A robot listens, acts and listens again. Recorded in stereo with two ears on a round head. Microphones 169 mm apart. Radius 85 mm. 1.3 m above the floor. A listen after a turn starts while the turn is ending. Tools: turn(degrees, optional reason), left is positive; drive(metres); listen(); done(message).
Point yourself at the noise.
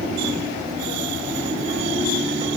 listen()
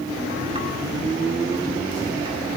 listen()
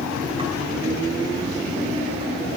done("I can't make out anything.")